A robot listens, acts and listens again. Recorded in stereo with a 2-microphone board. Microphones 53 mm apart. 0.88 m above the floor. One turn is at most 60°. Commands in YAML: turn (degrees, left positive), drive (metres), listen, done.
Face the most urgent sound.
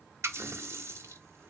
listen: true
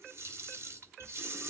listen: true
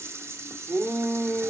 turn: -50
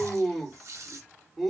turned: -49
done: "Found it: a shout, straight ahead."